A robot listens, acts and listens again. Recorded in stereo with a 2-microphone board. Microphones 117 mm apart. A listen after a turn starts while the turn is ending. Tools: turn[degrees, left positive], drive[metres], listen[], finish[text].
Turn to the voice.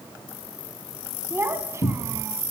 Thought: The child speaking: about 25° right or 155° right.
Action: turn[-25]
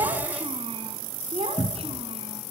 Thought: So it is at 115° right.
Action: turn[-115]
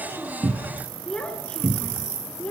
Thought: The child speaking is now 10° left.
Action: turn[10]
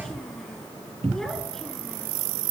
Action: listen[]
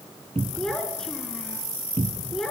Action: finish[Found it: a child speaking, straight ahead.]